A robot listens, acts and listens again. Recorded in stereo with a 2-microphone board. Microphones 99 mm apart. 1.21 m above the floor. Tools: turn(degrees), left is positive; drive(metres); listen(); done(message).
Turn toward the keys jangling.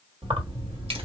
turn(degrees=-70)
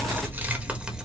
done("Found it: keys jangling, straight ahead, 1 to 2 m away.")